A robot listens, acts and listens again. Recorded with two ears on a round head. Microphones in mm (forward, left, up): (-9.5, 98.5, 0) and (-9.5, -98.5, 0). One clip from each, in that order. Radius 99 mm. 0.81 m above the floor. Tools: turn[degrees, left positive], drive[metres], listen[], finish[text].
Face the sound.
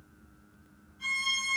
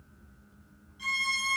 Thought: The violin: about 45° right or 135° right.
Action: turn[-45]
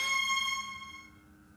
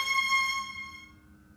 Action: finish[Facing the violin, 1 to 2 m away.]